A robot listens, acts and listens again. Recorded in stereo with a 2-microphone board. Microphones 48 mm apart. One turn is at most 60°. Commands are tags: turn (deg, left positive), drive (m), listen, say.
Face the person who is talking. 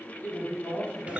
<turn deg="40"/>
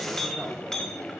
<listen/>
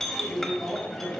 <say>Found it: a woman speaking, straight ahead, 2 to 4 m away.</say>